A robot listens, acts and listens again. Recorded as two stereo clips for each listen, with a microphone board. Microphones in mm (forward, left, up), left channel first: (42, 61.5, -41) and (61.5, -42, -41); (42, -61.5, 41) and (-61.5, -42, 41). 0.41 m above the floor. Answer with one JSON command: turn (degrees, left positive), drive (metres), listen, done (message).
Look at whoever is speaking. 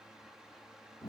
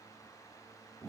{"listen": true}
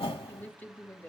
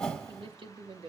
{"turn": 170}
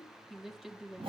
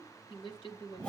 {"done": "Found it: a woman speaking, straight ahead."}